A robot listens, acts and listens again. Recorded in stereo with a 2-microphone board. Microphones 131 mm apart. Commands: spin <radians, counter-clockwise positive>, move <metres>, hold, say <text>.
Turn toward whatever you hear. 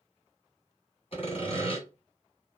spin 0.87
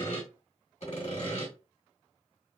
spin 1.31
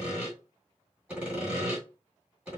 spin -0.17
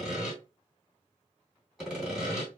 say Facing the sawing.